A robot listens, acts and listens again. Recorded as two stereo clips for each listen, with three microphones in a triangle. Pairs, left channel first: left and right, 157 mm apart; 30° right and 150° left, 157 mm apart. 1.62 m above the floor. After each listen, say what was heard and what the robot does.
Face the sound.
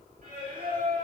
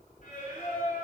The singing: 65° right. Turn 65° right.
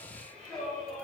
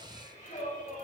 Facing the singing.